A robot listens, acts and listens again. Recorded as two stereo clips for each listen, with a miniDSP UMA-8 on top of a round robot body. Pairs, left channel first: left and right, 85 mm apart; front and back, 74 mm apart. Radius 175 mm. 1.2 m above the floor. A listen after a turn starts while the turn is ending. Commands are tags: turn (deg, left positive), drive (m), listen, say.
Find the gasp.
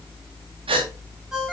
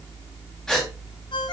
<turn deg="-85"/>
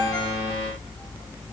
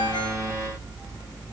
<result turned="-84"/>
<say>Facing where the gasp came from. I can't hear it now.</say>